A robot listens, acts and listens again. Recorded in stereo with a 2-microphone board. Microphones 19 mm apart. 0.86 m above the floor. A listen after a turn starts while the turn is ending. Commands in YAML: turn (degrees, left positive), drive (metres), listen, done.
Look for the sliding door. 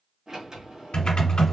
turn: -45
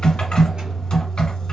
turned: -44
listen: true
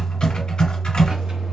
listen: true
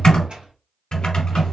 turn: -90
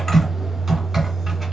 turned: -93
listen: true
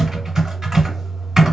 listen: true
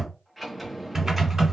done: "Found it: a sliding door, straight ahead."